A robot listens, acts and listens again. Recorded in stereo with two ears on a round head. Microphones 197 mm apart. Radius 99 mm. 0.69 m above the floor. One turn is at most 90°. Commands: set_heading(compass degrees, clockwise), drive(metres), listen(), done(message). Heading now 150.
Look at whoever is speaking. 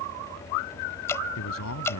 set_heading(60)
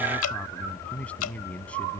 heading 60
done("Found it: a man speaking, straight ahead.")